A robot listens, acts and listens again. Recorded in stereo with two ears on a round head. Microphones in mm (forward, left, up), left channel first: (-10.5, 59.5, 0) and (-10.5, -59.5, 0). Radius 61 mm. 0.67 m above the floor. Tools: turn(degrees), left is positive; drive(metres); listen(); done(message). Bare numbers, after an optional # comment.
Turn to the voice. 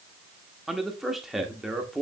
turn(30)
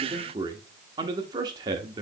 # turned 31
# So it is at 35° right.
turn(-35)
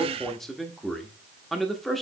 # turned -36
done("Found it: a man speaking, straight ahead.")